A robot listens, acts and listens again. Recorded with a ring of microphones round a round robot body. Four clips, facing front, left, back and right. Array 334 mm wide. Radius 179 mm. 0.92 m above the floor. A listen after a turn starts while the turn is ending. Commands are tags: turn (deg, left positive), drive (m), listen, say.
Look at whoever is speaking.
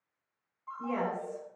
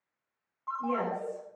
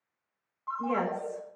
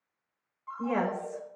<turn deg="-115"/>
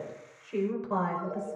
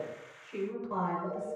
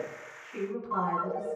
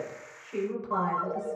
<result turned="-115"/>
<turn deg="-20"/>
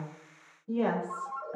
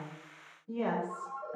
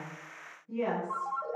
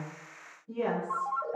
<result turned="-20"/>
<say>Found it: a woman speaking, straight ahead, over 4 m away.</say>